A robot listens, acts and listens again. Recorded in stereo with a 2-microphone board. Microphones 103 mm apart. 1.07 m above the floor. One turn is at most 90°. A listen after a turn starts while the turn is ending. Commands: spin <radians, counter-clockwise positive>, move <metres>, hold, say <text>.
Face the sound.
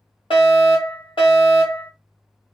spin 0.96
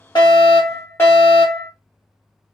spin 0.44
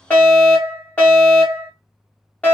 spin 0.26
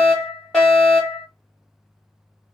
spin 0.17
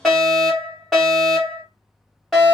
say Found it: a fire alarm, straight ahead.